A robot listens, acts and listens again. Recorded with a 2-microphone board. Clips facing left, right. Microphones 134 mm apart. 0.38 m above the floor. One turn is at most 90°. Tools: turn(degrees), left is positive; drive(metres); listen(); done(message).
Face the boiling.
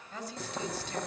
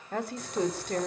turn(degrees=60)
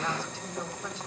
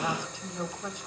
turn(degrees=65)
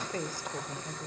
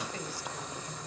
turn(degrees=-10)
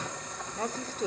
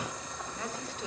done("Found it: boiling, straight ahead.")